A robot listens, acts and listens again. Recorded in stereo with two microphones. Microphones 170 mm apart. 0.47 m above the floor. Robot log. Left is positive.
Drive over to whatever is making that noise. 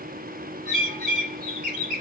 note: The bird: about 55° right or 125° right.
cmd yaw -55
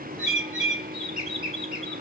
cmd fwd 1.0
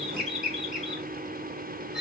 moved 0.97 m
cmd fwd 1.0
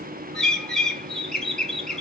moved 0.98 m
cmd fwd 1.0
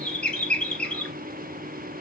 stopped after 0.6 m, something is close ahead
end: Arrived at the bird, straight ahead.